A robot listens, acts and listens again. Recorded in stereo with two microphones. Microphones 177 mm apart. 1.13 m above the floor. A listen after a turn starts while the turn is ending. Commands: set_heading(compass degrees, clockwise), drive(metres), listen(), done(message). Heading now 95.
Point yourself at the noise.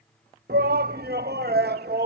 set_heading(185)
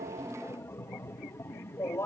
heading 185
set_heading(170)
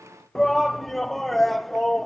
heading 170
done("Found it: a shout, straight ahead.")